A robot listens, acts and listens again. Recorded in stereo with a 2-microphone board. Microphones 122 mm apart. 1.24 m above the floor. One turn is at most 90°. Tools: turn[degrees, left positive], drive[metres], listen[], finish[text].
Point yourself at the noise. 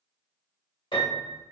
Thought: The piano: about 45° left or 135° left.
Action: turn[45]
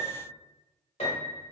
Thought: So it is at 85° left.
Action: turn[85]
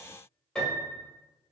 Action: finish[Found it: a piano, straight ahead, 1 to 2 m away.]